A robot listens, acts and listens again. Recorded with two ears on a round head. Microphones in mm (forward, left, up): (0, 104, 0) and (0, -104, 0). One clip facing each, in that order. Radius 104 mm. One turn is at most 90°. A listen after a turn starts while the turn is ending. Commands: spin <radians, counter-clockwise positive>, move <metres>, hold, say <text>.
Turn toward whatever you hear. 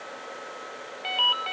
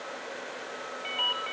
spin 1.05
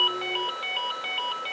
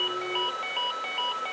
spin 0.61
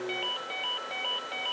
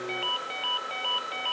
say Facing the ringtone.